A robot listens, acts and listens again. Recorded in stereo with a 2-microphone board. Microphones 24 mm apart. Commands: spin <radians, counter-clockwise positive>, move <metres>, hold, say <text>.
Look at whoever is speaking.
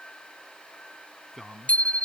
spin -0.52
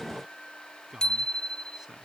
spin -2.62
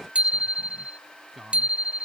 say Facing the man speaking.